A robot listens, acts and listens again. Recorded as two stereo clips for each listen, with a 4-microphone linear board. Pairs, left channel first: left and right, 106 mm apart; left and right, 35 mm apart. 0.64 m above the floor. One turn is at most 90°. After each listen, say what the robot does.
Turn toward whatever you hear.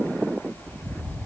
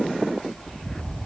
Keep listening.
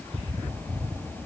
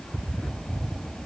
Keep listening.
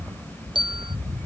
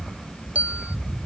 Turn 45° right.
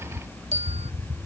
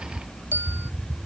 Turn 85° right.
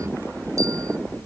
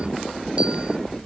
Keep listening.
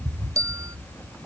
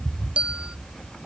Turn 30° right.
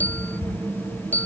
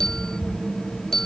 Turn 15° left.
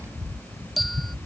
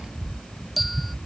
Facing the bell.